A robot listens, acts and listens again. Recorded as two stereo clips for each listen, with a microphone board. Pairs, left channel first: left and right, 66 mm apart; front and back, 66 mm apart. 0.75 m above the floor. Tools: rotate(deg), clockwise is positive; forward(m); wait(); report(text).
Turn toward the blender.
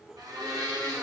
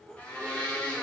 rotate(70)
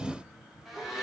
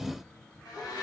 report("Found it: a blender, straight ahead.")